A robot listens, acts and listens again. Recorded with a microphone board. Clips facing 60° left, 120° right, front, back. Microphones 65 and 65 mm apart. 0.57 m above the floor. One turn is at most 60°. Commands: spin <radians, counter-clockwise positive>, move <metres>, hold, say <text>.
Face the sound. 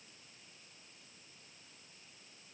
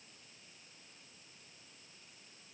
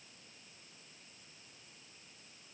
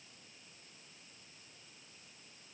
hold
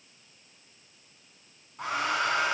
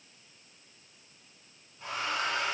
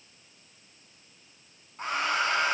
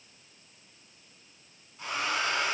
spin 0.87
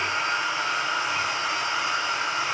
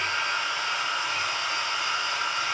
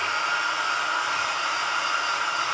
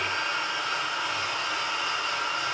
say Facing the hair dryer.